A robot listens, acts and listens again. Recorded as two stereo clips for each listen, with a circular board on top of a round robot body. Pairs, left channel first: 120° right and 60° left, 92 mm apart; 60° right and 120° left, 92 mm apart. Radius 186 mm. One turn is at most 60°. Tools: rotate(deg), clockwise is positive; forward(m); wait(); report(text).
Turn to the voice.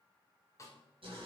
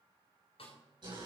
wait()
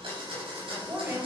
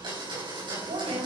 rotate(-60)
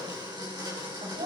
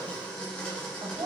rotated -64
rotate(-60)
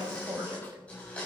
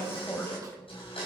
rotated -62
report("Facing the woman speaking.")